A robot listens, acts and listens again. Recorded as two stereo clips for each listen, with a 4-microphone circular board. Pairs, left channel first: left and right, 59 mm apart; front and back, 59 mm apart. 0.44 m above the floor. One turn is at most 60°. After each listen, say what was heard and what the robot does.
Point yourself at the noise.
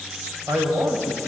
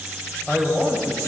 The man speaking: 90° right. Turn 60° right.
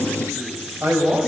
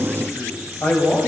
The man speaking is now 50° right. Turn 50° right.
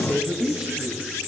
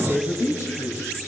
The man speaking is now 10° right. Turn 10° right.
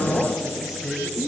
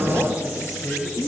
Facing the man speaking, 2 to 4 m away.